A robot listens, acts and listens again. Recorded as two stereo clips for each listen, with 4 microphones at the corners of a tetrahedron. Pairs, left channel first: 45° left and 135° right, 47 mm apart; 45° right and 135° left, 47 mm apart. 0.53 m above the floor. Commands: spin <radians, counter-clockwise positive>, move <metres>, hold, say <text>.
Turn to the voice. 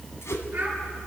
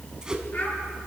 spin -1.66
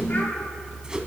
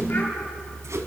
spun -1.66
hold
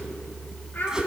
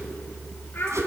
say Facing the child speaking, over 4 m away.